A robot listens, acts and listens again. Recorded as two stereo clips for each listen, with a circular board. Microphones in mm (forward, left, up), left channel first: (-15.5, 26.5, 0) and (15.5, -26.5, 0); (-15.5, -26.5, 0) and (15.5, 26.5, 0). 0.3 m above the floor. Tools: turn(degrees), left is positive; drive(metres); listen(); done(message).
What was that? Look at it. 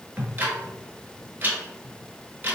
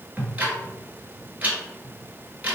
done("Facing the ticking.")